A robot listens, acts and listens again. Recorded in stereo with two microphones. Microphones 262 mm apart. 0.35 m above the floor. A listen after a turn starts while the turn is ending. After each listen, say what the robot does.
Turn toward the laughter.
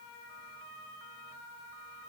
Keep listening.
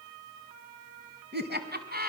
Turn 35° right.
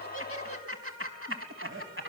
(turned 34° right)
Turn 130° right.
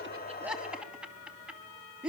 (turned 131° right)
Found it: laughter, straight ahead, 2 to 4 m away.